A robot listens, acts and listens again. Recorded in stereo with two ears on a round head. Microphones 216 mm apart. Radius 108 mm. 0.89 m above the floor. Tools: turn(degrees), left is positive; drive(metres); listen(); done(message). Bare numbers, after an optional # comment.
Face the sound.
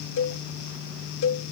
# The cowbell: about 55° left or 125° left.
turn(55)
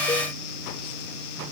listen()
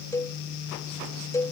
# So it is at 15° left.
turn(15)
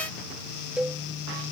done("Found it: a cowbell, straight ahead.")